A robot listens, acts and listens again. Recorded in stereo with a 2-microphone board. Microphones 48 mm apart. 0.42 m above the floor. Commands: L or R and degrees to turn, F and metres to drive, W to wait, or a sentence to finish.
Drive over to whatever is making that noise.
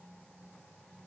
W
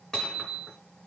L30
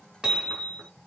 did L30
R20
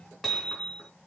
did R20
F1.0
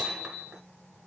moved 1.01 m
R15
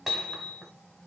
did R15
F1.0
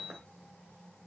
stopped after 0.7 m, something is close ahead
Arrived at the hammering, straight ahead.